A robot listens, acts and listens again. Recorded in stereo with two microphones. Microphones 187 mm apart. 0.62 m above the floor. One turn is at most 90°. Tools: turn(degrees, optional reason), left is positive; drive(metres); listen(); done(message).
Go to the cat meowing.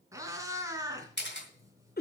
turn(degrees=-15, reason="The cat meowing: about 15° right or 165° right.")
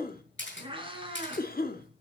turn(degrees=-90, reason="So it is at 150° right.")
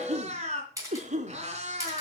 turn(degrees=-35, reason="The cat meowing is now 35° right.")
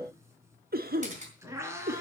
turn(degrees=-15, reason="The cat meowing is now 15° right.")
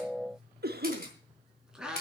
drive(metres=1.0)
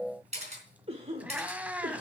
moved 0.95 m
turn(degrees=-10, reason="The cat meowing is now 10° right.")
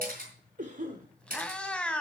drive(metres=1.0)
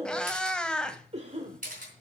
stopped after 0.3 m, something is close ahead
done("Arrived at the cat meowing, straight ahead.")